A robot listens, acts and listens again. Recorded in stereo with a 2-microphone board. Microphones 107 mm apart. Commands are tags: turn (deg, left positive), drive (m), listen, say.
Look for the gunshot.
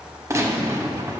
<turn deg="-30"/>
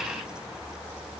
<listen/>
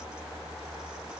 <say>I heard a gunshot, but can't make it out now. It was about straight ahead or 120° right.</say>